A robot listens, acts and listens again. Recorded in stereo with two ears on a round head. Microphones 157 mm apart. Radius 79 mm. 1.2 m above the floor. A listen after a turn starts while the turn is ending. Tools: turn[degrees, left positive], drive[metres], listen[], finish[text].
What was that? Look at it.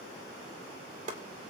Thought: The chopping: about 40° right or 140° right.
Action: turn[-40]
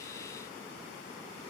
Action: listen[]
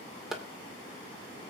Action: finish[Facing the chopping.]